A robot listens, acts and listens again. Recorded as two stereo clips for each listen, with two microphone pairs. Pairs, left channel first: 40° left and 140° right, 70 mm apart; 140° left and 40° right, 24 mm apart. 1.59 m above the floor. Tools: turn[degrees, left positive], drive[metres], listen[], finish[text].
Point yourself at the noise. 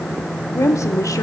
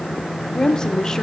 Thought: The woman speaking: 80° left.
Action: turn[80]
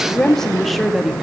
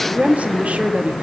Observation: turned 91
Thought: The woman speaking is now 55° right.
Action: turn[-55]
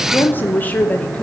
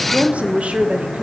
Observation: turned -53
Thought: The woman speaking is now 30° right.
Action: turn[-30]
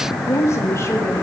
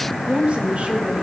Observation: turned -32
Thought: The woman speaking is now 10° right.
Action: turn[-10]
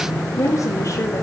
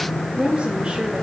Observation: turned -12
Action: finish[Facing the woman speaking, 2 to 4 m away.]